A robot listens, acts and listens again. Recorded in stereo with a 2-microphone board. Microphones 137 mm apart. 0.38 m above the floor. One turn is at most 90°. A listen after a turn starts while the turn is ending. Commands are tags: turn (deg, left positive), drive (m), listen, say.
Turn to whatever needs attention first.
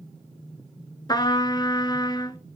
<listen/>
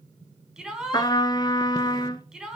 <turn deg="-30"/>
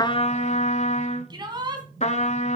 <turn deg="-90"/>
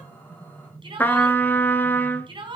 <turn deg="-40"/>
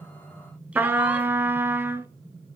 <listen/>
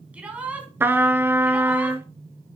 <turn deg="-10"/>
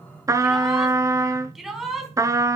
<say>Found it: a shout, straight ahead.</say>